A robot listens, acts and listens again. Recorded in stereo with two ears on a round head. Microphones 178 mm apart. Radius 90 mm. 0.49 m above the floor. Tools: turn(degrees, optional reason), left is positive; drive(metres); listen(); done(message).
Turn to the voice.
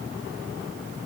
listen()
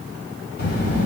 turn(degrees=60, reason="The child speaking: about 60° left or 120° left.")
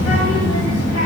turn(degrees=60, reason="So it is at 60° left.")
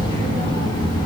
turn(degrees=25, reason="The child speaking is now 25° left.")
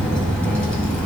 done("Found it: a child speaking, straight ahead, 1 to 2 m away.")